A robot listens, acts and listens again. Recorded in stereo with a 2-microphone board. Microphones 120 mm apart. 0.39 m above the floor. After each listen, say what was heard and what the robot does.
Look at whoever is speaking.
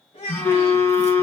The child speaking: about 50° left or 130° left. Turn 50° left.
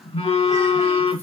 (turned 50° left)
Keep listening.
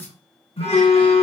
Keep listening.
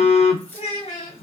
So it is at 70° left. Turn 70° left.
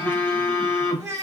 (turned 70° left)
The child speaking is now 15° right. Turn 15° right.
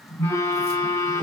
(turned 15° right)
Keep listening.
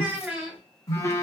Found it: a child speaking, straight ahead, 1 to 2 m away.